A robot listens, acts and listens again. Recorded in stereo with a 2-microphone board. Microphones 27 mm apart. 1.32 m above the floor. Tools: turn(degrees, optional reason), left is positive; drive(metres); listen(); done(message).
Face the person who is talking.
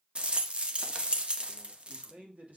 turn(degrees=-65, reason="The man speaking: about 65° right or 115° right.")
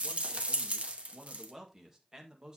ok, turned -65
turn(degrees=-30, reason="So it is at 30° right.")
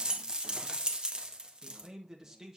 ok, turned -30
turn(degrees=-25, reason="The man speaking is now 25° right.")
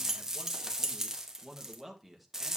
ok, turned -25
done("Found it: a man speaking, straight ahead, 1 to 2 m away.")